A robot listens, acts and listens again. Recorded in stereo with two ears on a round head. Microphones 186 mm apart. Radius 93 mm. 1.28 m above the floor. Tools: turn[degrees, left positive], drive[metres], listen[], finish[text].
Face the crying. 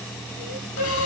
Thought: The crying: about 55° left or 125° left.
Action: turn[55]
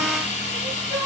Action: finish[Found it: crying, straight ahead.]